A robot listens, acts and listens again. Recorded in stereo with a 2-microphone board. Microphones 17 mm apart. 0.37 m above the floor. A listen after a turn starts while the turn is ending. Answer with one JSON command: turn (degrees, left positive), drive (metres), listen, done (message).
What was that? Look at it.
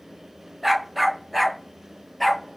{"turn": 30}
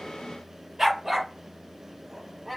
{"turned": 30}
{"turn": -20}
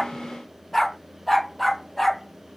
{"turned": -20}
{"done": "Facing the dog barking, 2 to 4 m away."}